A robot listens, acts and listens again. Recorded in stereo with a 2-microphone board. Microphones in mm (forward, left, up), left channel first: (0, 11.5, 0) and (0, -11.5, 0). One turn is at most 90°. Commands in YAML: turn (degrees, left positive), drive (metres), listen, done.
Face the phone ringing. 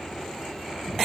listen: true
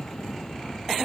listen: true
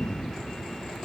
done: "I can't make out a phone ringing to turn to."